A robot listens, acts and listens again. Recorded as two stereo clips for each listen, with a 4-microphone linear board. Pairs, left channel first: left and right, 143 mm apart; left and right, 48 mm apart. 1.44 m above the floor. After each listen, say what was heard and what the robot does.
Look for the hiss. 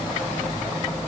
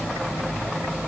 Keep listening.
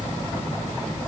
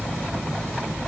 Keep listening.
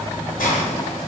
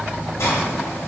Turn 90° left.
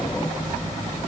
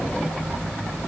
Keep listening.
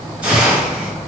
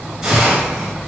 The hiss is now 10° right. Turn 10° right.
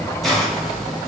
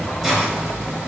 Found it: a hiss, straight ahead, under 1 m away.